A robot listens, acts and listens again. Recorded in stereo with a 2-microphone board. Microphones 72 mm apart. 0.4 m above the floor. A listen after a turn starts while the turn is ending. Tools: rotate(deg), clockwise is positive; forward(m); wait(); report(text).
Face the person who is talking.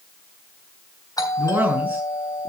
rotate(25)
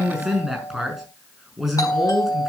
report("Facing the man speaking.")